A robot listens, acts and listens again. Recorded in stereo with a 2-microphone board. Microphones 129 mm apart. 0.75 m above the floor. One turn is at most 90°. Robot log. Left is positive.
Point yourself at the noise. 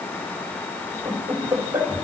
note: The laughter: about 15° right or 165° right.
cmd yaw -15
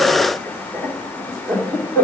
note: So it is at 20° left.
cmd yaw +20
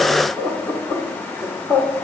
note: The laughter is now 20° left.
cmd yaw +20
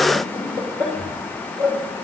end: Facing the laughter, 2 to 4 m away.